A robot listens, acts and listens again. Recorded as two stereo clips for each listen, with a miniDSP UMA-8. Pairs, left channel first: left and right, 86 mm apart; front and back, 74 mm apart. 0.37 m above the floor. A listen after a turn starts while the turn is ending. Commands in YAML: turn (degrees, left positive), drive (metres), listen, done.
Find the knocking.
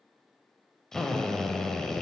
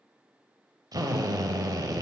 listen: true
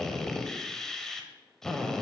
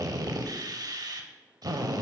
listen: true
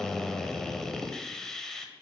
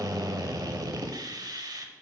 done: "I can't make out knocking to turn to."